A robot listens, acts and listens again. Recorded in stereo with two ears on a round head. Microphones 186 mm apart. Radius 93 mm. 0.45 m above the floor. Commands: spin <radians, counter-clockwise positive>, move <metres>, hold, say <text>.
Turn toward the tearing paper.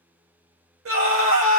hold
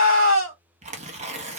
spin -0.61
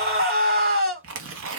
spin -1.92
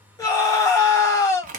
spin -0.70
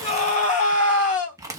spin -0.26
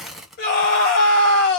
say Found it: tearing paper, straight ahead.